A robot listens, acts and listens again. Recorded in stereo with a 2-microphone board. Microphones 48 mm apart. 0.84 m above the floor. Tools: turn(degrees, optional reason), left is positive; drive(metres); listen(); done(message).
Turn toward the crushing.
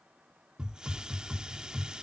listen()
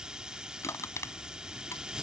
turn(degrees=75, reason="The crushing: about 75° left or 105° left.")
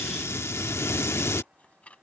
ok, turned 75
turn(degrees=30, reason="So it is at 30° left.")
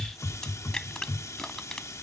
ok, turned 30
turn(degrees=15, reason="The crushing is now 15° left.")
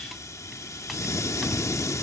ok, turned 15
listen()
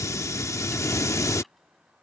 listen()
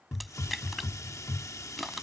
done("Facing the crushing.")